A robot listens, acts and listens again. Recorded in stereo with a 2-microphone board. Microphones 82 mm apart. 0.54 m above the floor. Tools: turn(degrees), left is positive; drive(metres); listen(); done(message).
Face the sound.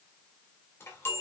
turn(degrees=30)
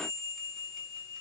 done("Facing the chime, 2 to 4 m away.")